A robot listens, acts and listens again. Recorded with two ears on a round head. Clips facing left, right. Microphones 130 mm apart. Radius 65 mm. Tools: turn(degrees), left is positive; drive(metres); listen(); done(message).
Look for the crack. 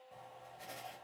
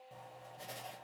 listen()
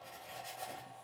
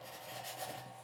listen()
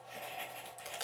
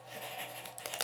turn(degrees=-70)
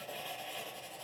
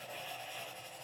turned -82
listen()
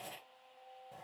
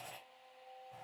done("I heard a crack, but can't make it out now. It was about 10° left or 25° right.")